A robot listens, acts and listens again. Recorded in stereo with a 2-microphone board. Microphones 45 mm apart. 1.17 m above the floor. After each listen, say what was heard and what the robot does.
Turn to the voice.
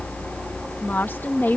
The woman speaking: about 50° left or 130° left. Turn 50° left.
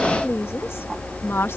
So it is at 80° left. Turn 80° left.
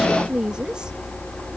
The woman speaking is now 20° right. Turn 20° right.
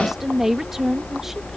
The woman speaking is now 10° right. Turn 10° right.
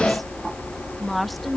Facing the woman speaking.